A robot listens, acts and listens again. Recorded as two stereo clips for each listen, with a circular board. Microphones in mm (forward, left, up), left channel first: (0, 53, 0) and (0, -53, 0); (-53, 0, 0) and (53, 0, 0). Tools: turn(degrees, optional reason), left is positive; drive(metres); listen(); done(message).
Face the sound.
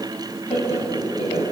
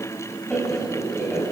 turn(degrees=100, reason="The laughter: 100° left.")
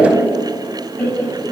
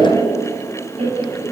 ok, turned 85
turn(degrees=15, reason="The laughter is now 15° left.")
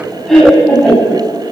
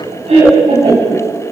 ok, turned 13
done("Facing the laughter, over 4 m away.")